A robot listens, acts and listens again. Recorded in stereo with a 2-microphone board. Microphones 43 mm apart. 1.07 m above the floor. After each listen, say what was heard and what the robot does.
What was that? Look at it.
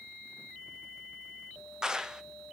The clap: about 20° right or 160° right. Turn 20° right.
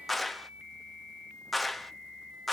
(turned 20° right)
Found it: a clap, straight ahead.